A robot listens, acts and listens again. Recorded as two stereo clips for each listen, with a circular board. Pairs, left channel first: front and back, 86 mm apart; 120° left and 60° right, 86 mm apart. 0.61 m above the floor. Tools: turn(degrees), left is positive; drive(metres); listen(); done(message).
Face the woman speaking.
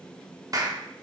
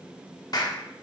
listen()
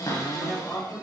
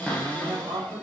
turn(degrees=-75)
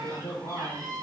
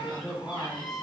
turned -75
turn(degrees=25)
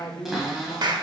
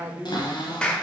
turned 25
done("Found it: a woman speaking, straight ahead.")